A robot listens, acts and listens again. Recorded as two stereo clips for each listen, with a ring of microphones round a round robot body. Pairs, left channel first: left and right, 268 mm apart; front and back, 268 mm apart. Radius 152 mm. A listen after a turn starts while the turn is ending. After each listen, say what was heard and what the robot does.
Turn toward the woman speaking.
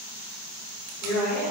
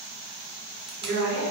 The woman speaking: 135° left. Turn 135° left.
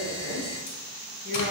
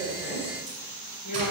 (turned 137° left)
The woman speaking is now 25° right. Turn 25° right.
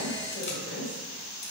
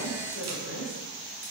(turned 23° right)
The woman speaking is now 10° right. Turn 10° right.
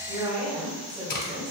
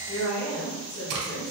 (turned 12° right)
The woman speaking is now 15° right. Turn 15° right.
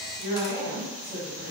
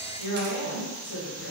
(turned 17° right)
Facing the woman speaking.